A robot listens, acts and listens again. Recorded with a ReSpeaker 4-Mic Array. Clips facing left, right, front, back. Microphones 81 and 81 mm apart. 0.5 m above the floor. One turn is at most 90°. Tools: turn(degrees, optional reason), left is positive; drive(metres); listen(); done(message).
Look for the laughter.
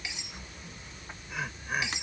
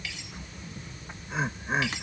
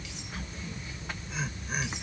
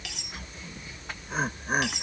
turn(degrees=-90, reason="The laughter: 150° right.")
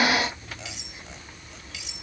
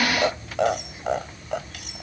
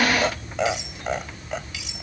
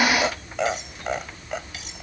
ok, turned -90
turn(degrees=-90, reason="The laughter is now 95° right.")
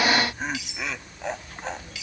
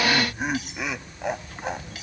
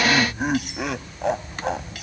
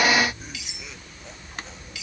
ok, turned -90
turn(degrees=-10, reason="The laughter is now 10° right.")
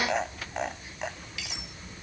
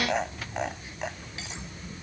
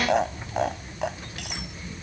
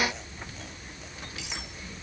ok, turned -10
done("Facing the laughter.")